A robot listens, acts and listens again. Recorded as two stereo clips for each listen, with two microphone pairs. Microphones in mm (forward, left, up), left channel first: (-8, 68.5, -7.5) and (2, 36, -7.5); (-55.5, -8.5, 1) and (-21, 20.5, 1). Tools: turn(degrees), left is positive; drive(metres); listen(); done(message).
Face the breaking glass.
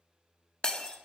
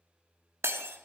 turn(degrees=50)
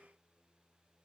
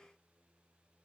done("I heard breaking glass from this way, but can't make it out now.")